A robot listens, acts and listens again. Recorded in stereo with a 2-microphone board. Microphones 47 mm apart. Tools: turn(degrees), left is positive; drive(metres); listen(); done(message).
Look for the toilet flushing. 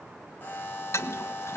turn(degrees=90)
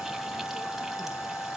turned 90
listen()
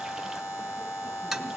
done("Found it: a toilet flushing, straight ahead, 1 to 2 m away.")